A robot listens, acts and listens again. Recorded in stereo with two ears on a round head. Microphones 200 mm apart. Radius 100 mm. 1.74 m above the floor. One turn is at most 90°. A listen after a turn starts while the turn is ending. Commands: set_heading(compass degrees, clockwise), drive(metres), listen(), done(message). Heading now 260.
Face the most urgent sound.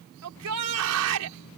set_heading(350)
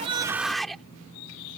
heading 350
done("Facing the shout.")